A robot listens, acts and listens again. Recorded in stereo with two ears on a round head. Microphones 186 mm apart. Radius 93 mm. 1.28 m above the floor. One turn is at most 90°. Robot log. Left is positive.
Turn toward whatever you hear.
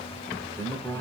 cmd yaw +30
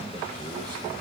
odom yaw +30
cmd idle
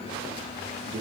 note: So it is at 25° right.
cmd yaw -25
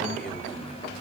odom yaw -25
cmd idle
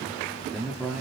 end: Found it: a man speaking, straight ahead.